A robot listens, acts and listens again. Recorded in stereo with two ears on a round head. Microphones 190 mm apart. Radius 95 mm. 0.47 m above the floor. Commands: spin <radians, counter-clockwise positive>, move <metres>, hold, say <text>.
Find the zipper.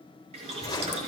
spin 0.35
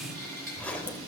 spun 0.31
spin 0.17
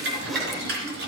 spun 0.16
hold
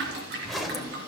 say Facing the zipper.